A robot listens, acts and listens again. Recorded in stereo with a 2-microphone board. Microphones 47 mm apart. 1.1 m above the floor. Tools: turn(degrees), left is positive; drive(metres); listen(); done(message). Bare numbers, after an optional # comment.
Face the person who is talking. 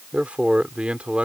# The man speaking: about 25° right or 155° right.
turn(-25)
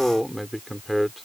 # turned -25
done("Found it: a man speaking, straight ahead.")